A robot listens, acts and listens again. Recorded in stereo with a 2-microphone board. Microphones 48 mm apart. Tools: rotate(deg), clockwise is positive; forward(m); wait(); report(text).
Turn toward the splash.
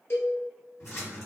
rotate(-70)
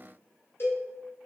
wait()
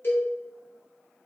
report("I heard a splash, but can't make it out now. It was about straight ahead or 40° left.")